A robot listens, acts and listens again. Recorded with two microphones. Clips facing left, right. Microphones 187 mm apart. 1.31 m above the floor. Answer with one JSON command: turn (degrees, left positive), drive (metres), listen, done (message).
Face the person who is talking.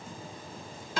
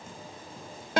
{"listen": true}
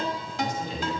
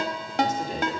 {"turn": -45}
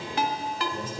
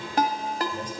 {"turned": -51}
{"done": "Facing the man speaking."}